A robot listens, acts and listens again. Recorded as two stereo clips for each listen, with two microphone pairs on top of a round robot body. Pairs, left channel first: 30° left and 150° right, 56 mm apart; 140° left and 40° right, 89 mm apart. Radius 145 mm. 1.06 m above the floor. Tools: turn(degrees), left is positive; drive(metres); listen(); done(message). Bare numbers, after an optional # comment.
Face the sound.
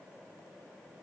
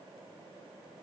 listen()
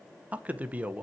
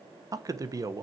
# The man speaking: 85° right.
turn(-85)
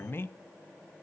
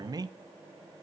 # The man speaking is now 10° right.
turn(-10)
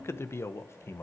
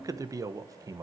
done("Facing the man speaking.")